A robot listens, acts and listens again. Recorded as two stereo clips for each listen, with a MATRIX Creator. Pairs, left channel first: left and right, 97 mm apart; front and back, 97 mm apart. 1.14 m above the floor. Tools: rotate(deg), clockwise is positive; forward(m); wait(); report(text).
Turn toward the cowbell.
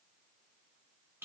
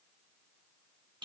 wait()
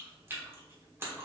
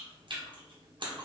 wait()
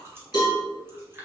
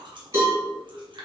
rotate(-125)
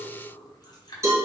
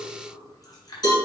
rotate(35)
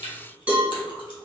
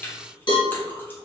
rotate(15)
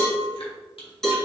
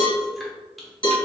report("Facing the cowbell, 1 to 2 m away.")